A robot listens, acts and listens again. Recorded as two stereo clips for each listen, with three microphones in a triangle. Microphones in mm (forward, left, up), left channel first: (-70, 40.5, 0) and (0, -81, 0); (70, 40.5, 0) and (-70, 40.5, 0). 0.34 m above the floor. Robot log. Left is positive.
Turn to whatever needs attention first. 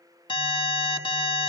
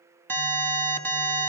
note: The alarm: 75° left.
cmd yaw +75
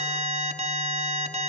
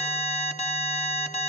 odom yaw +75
note: The alarm is now 30° right.
cmd yaw -30
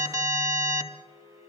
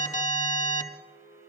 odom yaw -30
end: Facing the alarm, 2 to 4 m away.